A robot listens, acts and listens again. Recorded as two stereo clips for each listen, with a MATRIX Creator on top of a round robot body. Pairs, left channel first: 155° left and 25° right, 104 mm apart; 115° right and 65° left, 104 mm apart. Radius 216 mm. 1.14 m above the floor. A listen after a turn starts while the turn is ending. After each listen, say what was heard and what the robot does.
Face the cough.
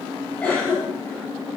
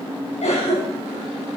The cough: 125° right. Turn 125° right.
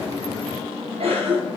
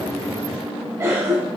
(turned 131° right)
Found it: a cough, straight ahead, over 4 m away.